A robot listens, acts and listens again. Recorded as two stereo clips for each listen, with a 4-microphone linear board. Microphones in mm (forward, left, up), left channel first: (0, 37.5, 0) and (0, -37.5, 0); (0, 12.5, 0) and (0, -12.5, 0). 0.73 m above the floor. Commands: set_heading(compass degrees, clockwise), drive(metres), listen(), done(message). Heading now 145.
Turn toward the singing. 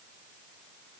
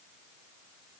listen()
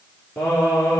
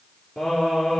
set_heading(130)
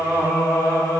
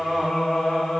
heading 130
set_heading(100)
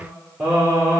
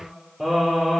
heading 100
set_heading(125)
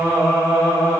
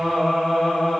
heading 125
set_heading(110)
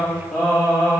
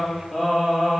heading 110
done("Found it: singing, straight ahead.")